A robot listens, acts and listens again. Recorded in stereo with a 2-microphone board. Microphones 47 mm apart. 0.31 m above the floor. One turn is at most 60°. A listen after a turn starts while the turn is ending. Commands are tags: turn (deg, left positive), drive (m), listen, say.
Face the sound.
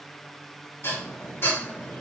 <turn deg="55"/>
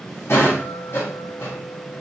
<turn deg="60"/>
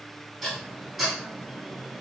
<say>Found it: dishes clattering, straight ahead, 1 to 2 m away.</say>